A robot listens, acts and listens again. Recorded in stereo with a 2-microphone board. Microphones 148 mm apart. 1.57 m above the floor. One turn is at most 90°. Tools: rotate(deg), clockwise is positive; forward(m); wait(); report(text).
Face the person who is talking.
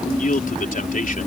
rotate(-60)
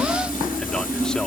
wait()
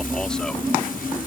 wait()
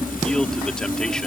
report("I heard a man speaking, but can't make it out now. It was about straight ahead or 60° left.")